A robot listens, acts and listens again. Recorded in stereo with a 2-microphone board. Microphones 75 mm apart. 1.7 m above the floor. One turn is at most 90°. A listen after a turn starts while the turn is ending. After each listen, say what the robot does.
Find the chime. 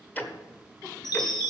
Turn 65° left.
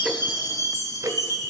Turn 50° left.
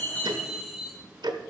Found it: a chime, straight ahead.